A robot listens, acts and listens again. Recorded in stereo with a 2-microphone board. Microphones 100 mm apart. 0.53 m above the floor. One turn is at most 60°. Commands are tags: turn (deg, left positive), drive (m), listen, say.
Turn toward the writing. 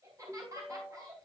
<listen/>
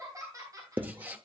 <turn deg="-15"/>
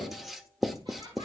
<say>Found it: writing, straight ahead, under 1 m away.</say>